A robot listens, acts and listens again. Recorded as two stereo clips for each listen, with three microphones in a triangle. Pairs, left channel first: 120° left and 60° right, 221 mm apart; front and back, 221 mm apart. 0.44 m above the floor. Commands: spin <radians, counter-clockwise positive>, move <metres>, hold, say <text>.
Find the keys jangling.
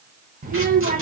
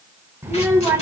hold
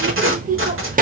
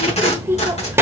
hold
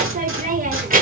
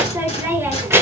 say I can't make out keys jangling to turn to.